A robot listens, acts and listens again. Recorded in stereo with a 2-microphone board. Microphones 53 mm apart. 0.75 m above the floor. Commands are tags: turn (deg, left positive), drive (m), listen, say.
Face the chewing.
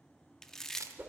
<turn deg="30"/>
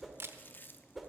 <turn deg="140"/>
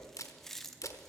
<turn deg="10"/>
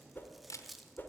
<say>Facing the chewing, under 1 m away.</say>